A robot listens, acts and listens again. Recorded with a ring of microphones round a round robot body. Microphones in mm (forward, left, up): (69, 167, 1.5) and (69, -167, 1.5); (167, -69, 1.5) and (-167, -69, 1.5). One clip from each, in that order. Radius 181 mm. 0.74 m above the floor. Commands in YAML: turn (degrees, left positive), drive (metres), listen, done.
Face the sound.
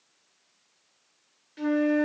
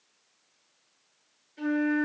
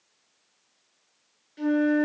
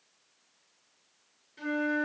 turn: 65
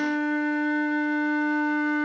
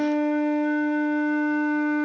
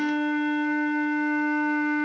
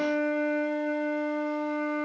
done: "Found it: a flute, straight ahead, 2 to 4 m away."